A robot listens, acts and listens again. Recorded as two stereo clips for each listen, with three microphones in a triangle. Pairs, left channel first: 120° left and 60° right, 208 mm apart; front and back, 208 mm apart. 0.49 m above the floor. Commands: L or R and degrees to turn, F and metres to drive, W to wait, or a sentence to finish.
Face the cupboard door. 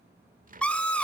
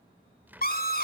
R100
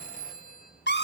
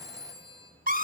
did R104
W
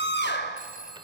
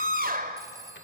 W
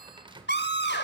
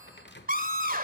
Facing the cupboard door, 1 to 2 m away.